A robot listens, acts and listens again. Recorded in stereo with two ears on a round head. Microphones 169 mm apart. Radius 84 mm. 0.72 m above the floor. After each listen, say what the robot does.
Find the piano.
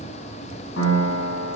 Turn 75° left.
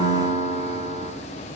Turn 30° left.
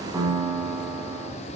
Turn 10° right.
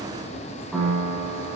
Facing the piano, over 4 m away.